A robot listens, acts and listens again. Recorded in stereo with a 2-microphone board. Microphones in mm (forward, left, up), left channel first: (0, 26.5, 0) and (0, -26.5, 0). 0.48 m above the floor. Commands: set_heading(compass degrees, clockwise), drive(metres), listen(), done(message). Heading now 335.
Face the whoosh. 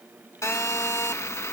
listen()
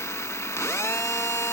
listen()
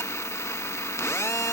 done("I can't make out a whoosh, only a phone buzzing.")